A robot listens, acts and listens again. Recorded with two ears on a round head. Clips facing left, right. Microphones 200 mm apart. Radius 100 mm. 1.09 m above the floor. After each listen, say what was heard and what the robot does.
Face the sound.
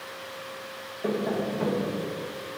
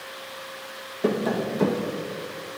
The tapping: about 70° right or 110° right. Turn 70° right.
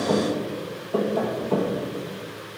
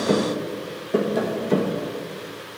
So it is at 30° right. Turn 30° right.
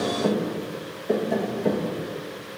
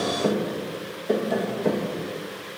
Facing the tapping, 1 to 2 m away.